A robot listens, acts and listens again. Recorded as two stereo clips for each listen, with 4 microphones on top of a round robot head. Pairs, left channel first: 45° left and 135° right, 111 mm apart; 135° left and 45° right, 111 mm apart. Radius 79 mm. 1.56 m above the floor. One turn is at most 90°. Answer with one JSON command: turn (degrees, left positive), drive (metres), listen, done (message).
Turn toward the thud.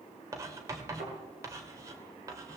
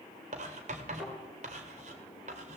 {"turn": -90}
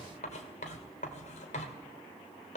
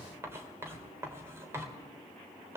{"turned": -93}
{"turn": -35}
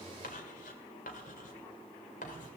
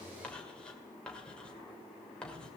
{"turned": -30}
{"done": "Facing where the thud came from. I can't hear it now."}